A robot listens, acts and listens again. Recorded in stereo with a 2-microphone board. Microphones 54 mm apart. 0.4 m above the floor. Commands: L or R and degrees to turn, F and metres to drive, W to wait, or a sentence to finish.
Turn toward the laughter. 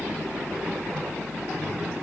W
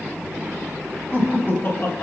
L45
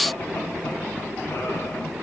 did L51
W
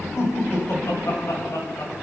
L80
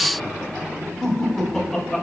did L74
Facing the laughter, 2 to 4 m away.